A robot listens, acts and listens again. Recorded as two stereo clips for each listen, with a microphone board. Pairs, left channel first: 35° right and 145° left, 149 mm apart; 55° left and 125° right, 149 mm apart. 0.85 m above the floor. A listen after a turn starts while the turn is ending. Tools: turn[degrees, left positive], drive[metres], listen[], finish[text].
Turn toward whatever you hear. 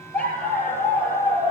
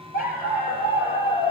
Thought: The dog barking: 50° left.
Action: turn[50]
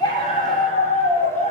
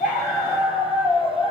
Action: finish[Found it: a dog barking, straight ahead.]